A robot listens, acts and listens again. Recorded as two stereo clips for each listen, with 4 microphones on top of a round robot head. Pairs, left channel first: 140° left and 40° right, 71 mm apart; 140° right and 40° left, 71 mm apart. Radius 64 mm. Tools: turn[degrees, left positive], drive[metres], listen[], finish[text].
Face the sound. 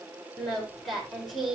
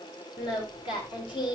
Thought: The singing: 130° right.
Action: turn[-130]
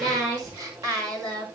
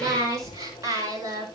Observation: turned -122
Action: finish[Found it: singing, straight ahead, over 4 m away.]